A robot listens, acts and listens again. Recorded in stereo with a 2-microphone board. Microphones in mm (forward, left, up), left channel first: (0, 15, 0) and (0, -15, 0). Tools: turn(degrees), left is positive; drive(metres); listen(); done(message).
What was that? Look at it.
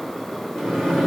turn(degrees=15)
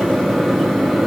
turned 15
done("Found it: a microwave, straight ahead.")